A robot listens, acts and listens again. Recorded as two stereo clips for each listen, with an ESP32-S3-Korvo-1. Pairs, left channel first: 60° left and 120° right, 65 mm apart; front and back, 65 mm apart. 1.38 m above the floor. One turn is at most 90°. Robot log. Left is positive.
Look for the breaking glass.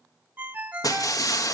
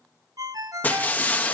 note: The breaking glass: 60° left.
cmd yaw +60
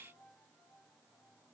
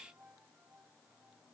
end: I heard breaking glass from this way, but can't make it out now.